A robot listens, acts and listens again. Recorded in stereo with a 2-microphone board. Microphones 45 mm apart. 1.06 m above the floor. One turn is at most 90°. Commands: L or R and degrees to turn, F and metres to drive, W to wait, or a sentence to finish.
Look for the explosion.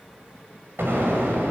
R65
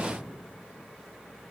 W
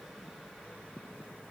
I heard an explosion, but can't make it out now. It was about straight ahead or 50° right.